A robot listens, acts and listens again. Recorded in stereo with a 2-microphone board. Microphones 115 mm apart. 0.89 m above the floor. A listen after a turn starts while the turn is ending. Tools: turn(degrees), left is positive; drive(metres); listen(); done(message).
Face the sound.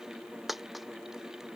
turn(degrees=30)
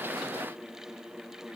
listen()
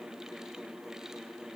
done("I heard a dropped coin, but can't make it out now. It was about 30° right or 150° left.")